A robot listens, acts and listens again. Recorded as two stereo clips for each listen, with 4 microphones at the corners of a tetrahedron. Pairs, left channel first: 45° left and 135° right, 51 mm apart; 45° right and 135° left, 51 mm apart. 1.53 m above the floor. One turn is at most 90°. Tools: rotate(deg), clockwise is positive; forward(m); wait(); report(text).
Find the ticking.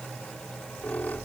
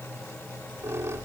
wait()
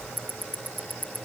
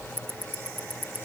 rotate(-90)
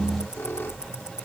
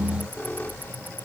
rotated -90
rotate(-85)
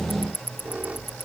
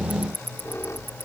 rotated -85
report("Facing the ticking.")